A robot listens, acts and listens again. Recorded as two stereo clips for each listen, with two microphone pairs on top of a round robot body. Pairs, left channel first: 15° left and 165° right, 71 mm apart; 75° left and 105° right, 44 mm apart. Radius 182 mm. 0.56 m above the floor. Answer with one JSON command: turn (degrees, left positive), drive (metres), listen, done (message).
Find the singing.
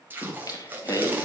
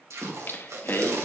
{"turn": 50}
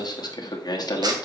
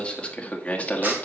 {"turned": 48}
{"turn": 25}
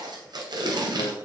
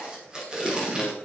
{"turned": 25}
{"listen": true}
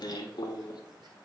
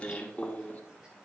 {"turn": 20}
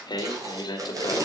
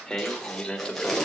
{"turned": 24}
{"turn": 10}
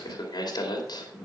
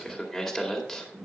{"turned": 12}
{"done": "Facing the singing, 2 to 4 m away."}